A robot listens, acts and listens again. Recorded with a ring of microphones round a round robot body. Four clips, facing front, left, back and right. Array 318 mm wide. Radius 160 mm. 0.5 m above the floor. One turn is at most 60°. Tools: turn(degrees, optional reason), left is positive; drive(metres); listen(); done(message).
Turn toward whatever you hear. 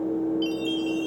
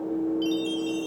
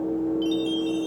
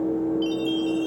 turn(degrees=60, reason="The chime: 80° left.")
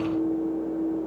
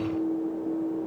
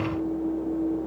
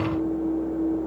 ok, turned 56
turn(degrees=20, reason="Nothing new. It was at 20° left.")
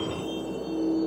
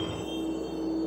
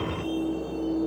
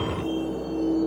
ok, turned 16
listen()
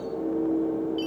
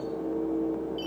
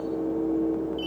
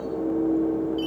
done("Found it: a chime, straight ahead, 2 to 4 m away.")